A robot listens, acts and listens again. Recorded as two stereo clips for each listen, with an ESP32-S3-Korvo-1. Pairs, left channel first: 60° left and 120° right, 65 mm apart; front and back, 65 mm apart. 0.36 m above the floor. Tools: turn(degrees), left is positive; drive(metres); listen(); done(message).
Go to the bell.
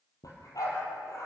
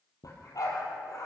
listen()
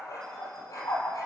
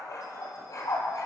listen()
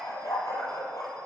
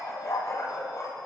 done("I can't make out a bell to turn to.")